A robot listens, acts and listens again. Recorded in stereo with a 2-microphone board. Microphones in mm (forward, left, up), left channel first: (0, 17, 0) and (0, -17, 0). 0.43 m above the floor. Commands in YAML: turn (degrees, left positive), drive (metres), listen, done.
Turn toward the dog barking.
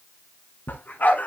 turn: 55
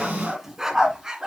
turn: -20
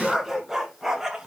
turn: -15
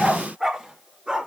turn: -20
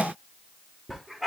done: "Found it: a dog barking, straight ahead."